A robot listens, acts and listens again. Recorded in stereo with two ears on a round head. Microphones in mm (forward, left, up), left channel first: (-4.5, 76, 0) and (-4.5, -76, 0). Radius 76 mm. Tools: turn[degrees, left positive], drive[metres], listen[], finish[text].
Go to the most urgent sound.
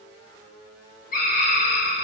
Thought: The scream: about 55° left or 125° left.
Action: turn[55]
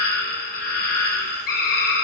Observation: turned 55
Thought: So it is at 65° left.
Action: turn[65]
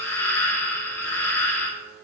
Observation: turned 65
Thought: The scream is now 15° left.
Action: turn[15]
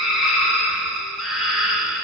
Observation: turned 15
Action: drive[1.0]
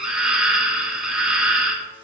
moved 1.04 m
Action: drive[1.0]
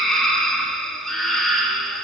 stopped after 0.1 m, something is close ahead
Action: finish[Arrived at the scream, straight ahead.]